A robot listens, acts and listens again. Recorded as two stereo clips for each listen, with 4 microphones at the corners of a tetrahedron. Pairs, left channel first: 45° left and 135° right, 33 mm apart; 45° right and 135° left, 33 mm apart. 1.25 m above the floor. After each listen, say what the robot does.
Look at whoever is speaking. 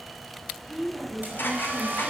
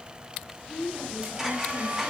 Turn 160° left.
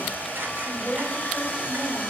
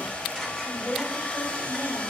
Turn 25° right.
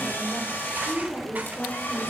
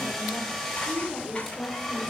Turn 10° left.
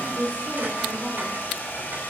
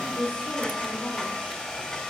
Found it: a woman speaking, straight ahead.